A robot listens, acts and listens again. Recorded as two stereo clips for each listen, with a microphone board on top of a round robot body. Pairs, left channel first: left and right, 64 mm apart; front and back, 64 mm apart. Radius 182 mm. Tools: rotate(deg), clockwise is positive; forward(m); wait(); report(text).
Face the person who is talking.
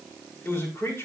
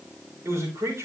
rotate(-135)
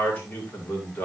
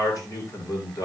rotate(-25)
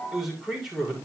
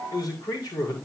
report("Facing the man speaking.")